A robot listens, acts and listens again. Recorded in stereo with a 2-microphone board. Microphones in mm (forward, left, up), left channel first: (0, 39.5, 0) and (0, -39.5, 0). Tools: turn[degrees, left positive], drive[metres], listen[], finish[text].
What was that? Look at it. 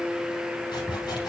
Thought: The sawing: about 65° left or 115° left.
Action: turn[65]
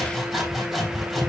Action: finish[Facing the sawing.]